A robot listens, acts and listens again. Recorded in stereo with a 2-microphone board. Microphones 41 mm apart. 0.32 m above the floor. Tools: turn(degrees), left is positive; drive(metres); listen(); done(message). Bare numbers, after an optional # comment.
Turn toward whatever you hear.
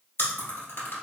turn(90)
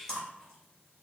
# So it is at 15° left.
turn(15)
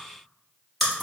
done("Found it: chewing, straight ahead, 1 to 2 m away.")